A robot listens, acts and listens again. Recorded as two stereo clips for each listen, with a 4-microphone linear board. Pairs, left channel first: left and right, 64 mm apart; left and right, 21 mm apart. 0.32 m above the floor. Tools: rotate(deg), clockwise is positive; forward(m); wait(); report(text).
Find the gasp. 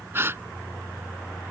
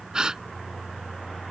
rotate(40)
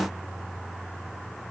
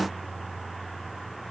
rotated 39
wait()
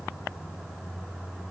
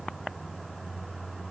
report("I heard a gasp, but can't make it out now. It was about straight ahead or 100° right.")